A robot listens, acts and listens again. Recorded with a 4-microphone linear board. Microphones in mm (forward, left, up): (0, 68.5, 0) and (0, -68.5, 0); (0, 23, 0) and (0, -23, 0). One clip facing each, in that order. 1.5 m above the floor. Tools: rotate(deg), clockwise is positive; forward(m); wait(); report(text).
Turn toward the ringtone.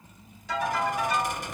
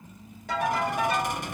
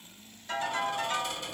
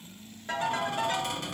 rotate(60)
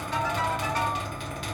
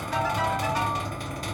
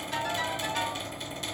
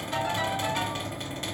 rotate(10)
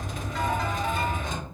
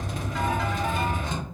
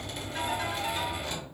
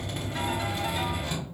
wait()
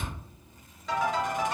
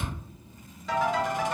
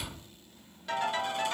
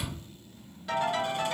report("Found it: a ringtone, straight ahead, 1 to 2 m away.")